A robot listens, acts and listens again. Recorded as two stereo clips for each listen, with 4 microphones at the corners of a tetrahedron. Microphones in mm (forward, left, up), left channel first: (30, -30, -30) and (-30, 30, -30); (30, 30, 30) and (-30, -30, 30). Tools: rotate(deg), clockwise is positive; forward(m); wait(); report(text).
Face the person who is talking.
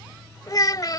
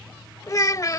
report("Found it: a child speaking, straight ahead.")